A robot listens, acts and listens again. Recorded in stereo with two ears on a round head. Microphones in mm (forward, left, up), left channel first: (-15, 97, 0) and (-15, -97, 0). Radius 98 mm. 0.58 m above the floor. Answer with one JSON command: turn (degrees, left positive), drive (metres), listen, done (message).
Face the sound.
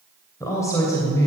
{"turn": 30}
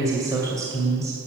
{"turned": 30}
{"turn": -15}
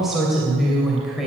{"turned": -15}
{"done": "Found it: a woman speaking, straight ahead, 2 to 4 m away."}